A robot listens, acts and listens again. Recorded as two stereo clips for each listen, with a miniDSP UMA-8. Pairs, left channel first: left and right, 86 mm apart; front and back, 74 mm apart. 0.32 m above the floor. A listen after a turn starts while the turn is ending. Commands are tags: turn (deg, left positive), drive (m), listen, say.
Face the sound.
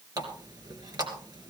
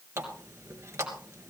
<turn deg="-130"/>
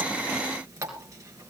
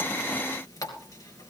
<turn deg="-40"/>
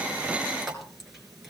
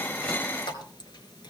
<say>Found it: a running tap, straight ahead, 2 to 4 m away.</say>